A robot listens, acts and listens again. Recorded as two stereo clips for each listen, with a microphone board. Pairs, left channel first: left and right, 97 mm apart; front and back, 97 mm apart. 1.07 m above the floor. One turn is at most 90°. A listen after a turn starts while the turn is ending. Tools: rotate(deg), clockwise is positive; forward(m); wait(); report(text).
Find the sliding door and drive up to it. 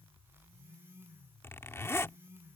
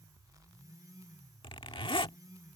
wait()
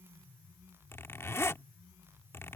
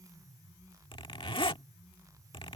wait()
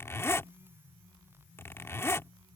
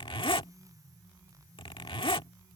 report("I can't make out a sliding door to turn to.")